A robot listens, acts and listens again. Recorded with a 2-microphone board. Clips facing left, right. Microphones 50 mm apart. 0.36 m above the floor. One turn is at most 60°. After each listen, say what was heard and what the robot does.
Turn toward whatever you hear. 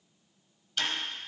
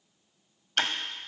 The ticking: about 60° right or 120° right. Turn 60° right.
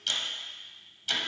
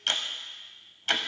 So it is at 50° right. Turn 50° right.
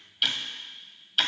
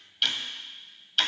Facing the ticking.